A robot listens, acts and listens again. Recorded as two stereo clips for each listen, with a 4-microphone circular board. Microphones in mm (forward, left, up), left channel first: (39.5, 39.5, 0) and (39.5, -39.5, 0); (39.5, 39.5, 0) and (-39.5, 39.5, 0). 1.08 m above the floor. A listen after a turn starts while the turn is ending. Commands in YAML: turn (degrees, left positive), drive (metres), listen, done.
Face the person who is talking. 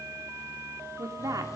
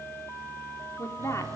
turn: -50
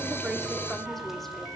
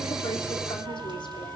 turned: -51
listen: true
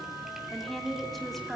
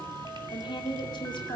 done: "Facing the woman speaking."